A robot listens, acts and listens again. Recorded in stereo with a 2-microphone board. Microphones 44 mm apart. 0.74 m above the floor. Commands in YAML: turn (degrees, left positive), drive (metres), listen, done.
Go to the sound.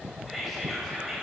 turn: 30
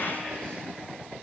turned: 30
listen: true
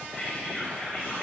turn: 150
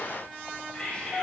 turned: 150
turn: 25
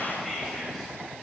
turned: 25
drive: 1.0
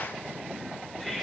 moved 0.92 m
drive: 1.0
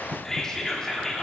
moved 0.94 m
turn: 15
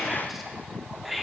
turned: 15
drive: 1.0
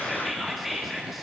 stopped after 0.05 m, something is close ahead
done: "I am next to the whispering."